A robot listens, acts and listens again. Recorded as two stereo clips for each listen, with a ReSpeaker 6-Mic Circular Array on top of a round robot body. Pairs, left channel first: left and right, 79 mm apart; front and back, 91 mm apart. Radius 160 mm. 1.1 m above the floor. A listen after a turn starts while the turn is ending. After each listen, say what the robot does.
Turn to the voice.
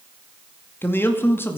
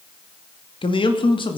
Turn 30° left.
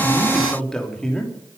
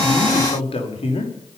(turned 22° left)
Turn 10° left.
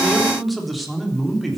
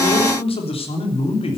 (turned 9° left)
Found it: a man speaking, straight ahead.